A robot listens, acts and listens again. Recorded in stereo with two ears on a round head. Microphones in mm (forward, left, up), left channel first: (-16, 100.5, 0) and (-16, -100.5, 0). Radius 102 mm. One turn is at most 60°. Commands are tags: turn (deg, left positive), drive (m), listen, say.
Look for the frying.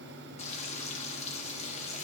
<turn deg="30"/>
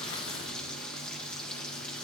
<say>Found it: frying, straight ahead, 1 to 2 m away.</say>